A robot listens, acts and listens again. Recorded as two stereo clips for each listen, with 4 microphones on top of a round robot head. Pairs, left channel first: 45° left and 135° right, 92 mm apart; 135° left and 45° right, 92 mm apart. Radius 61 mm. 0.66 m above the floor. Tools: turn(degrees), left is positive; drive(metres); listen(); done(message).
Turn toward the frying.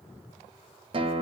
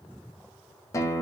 listen()
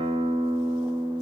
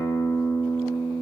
listen()
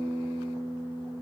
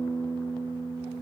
done("I can't make out frying, only a guitar.")